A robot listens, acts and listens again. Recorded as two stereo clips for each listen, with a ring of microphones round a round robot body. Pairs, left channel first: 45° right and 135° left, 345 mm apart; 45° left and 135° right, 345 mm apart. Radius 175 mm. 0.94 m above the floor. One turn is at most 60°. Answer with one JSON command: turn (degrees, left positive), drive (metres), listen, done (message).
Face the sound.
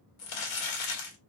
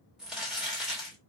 {"turn": -45}
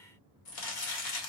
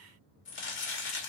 {"turn": -15}
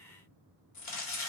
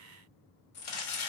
{"done": "Facing the crumpling."}